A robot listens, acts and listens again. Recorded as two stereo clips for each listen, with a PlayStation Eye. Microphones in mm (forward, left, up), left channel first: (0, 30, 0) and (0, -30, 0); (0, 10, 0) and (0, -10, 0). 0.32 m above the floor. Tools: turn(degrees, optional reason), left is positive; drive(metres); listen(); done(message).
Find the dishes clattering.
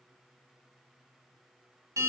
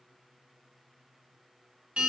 listen()
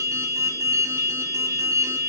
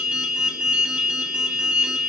listen()
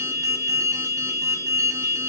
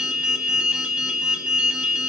done("I can't make out dishes clattering, only an alarm.")